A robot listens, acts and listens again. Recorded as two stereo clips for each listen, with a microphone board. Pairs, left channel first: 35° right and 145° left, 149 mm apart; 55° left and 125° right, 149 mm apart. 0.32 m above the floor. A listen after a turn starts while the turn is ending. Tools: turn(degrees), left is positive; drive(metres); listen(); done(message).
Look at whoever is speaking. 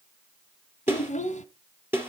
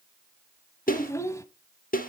turn(degrees=-10)
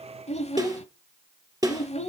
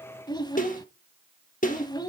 done("Found it: a child speaking, straight ahead.")